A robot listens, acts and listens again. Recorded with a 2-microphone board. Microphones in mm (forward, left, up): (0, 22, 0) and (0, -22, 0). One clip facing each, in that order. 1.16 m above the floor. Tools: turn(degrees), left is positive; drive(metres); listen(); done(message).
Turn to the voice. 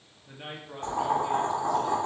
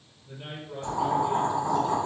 turn(degrees=55)
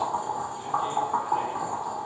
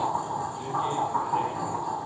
listen()
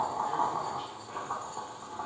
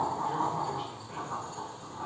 listen()
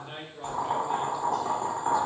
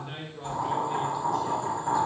done("Found it: a man speaking, straight ahead, 1 to 2 m away.")